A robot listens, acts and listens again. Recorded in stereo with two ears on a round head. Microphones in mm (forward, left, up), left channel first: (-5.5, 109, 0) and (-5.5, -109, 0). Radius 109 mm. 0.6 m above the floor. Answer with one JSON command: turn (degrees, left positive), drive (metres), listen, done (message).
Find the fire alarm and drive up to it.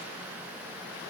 {"listen": true}
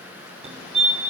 {"turn": -30}
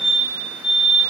{"drive": 1.0}
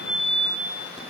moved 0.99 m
{"drive": 1.0}
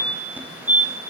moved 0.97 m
{"turn": -15}
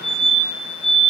{"drive": 1.0}
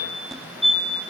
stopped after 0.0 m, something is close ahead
{"done": "I am next to the fire alarm."}